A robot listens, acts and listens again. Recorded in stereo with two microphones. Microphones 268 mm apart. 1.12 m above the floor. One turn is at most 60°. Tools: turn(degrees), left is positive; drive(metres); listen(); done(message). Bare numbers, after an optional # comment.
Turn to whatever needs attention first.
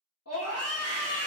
# The scream: about 65° left or 115° left.
turn(60)
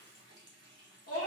# So it is at 55° left.
turn(55)
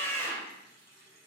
# The scream is now 10° left.
turn(10)
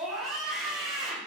done("Found it: a scream, straight ahead, 1 to 2 m away.")